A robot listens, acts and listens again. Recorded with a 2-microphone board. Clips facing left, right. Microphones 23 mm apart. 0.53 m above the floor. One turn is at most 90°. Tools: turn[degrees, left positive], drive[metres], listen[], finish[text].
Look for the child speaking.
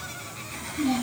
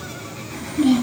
Action: turn[-90]
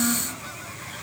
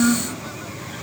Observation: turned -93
Action: finish[Facing the child speaking.]